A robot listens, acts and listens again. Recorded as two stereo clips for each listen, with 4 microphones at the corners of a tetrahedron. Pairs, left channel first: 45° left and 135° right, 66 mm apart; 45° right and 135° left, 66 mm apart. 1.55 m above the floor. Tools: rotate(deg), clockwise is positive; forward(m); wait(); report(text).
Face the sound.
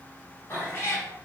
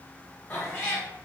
report("Found it: a cat meowing, straight ahead.")